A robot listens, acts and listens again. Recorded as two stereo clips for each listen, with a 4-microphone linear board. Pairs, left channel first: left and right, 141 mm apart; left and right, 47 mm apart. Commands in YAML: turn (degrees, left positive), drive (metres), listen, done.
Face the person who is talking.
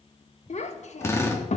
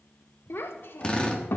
turn: 60
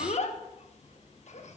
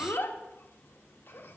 turn: 60
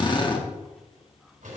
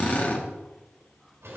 listen: true
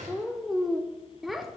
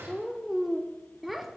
done: "Found it: a child speaking, straight ahead."